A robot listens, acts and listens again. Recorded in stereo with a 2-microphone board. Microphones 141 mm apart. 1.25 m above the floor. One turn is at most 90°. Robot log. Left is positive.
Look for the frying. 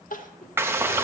note: The frying: about 15° right or 165° right.
cmd yaw -15
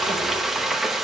end: Found it: frying, straight ahead.